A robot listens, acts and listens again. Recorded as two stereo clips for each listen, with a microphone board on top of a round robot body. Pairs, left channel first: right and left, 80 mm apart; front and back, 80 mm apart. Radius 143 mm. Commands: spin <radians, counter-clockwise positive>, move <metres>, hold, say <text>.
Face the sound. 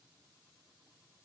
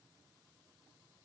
hold
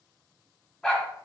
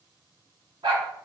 spin -2.97
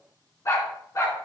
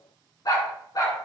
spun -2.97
spin -0.70
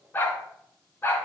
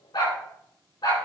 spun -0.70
spin -0.52
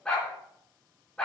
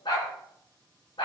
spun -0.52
spin -0.17
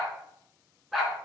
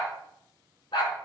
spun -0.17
say Facing the dog barking, over 4 m away.